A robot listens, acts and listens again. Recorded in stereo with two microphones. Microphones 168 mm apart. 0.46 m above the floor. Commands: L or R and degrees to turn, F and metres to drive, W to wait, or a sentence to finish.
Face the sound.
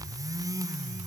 W
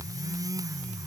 W
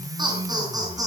R20
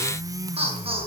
R35
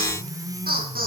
R115
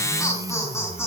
L15
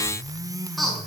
Found it: laughter, straight ahead.